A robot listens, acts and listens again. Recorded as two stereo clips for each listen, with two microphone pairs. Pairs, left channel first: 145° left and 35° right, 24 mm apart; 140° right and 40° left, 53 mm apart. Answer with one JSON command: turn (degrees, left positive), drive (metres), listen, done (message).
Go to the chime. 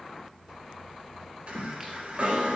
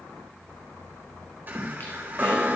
{"turn": -10}
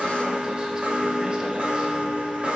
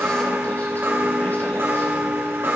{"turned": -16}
{"drive": 1.0}
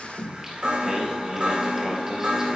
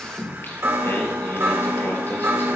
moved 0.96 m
{"drive": 1.0}
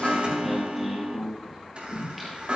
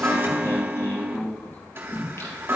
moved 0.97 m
{"drive": 1.0}
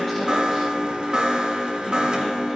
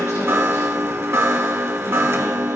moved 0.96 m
{"turn": 15}
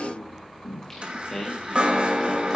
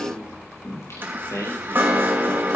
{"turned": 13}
{"drive": 1.0}
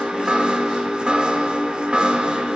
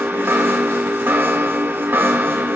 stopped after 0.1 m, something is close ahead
{"done": "Arrived at the chime, straight ahead."}